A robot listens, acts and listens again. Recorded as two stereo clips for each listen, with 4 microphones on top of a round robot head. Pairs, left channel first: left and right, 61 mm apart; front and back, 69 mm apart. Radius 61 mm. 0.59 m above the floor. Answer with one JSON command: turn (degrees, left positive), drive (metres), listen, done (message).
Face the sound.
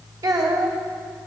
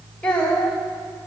{"turn": -75}
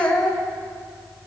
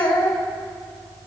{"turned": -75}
{"turn": 15}
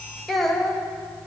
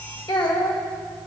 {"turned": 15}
{"done": "Facing the child speaking."}